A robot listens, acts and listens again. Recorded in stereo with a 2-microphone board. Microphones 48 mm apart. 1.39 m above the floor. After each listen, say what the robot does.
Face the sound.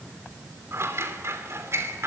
Turn 70° right.
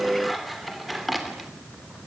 Facing the scissors, 2 to 4 m away.